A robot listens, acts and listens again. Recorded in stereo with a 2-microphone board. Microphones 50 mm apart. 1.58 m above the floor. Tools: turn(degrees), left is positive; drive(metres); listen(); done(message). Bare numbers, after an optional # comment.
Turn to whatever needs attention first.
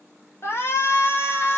# The shout: about 50° left or 130° left.
turn(50)
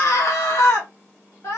# So it is at 80° left.
turn(80)
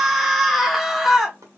done("Found it: a shout, straight ahead.")